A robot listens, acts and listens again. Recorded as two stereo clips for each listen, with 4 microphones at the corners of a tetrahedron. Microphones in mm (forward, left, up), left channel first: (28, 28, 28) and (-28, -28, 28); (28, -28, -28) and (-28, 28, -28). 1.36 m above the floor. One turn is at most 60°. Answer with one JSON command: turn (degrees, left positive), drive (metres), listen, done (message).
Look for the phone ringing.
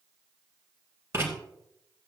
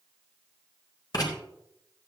{"listen": true}
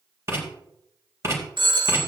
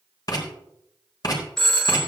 {"turn": -60}
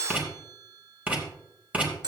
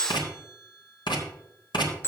{"turn": -60}
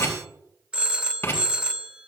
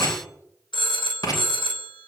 {"turn": -60}
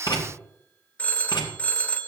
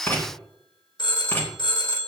{"turn": -25}
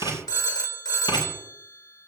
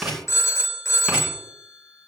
{"turn": 10}
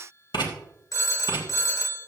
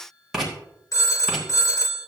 {"done": "Found it: a phone ringing, straight ahead, 1 to 2 m away."}